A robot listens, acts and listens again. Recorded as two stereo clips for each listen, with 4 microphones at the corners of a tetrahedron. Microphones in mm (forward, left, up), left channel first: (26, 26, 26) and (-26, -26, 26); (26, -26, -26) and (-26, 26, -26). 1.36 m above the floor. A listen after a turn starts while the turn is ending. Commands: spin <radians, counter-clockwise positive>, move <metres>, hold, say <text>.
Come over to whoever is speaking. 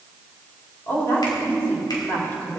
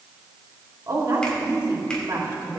spin 1.75
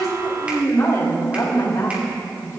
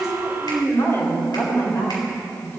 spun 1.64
move 1.0
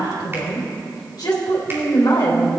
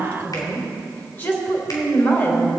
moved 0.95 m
spin 0.26
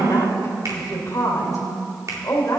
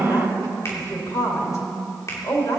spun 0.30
move 1.0
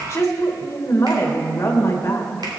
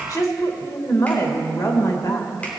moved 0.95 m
spin -0.17
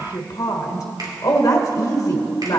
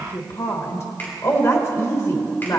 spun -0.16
move 1.0
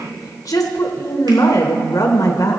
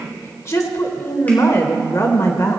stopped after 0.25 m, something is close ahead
say I am next to the woman speaking.